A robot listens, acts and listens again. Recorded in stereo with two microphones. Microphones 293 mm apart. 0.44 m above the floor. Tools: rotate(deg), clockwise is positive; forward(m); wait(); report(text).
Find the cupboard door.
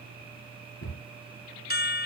rotate(-45)
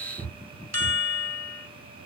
report("Facing the cupboard door.")